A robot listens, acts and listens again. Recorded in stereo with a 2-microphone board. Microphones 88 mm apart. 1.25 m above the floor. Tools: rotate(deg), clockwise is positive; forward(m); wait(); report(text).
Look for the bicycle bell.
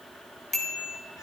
rotate(-30)
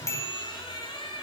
rotate(-145)
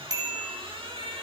rotate(45)
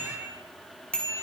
rotate(-10)
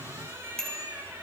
report("Found it: a bicycle bell, straight ahead, over 4 m away.")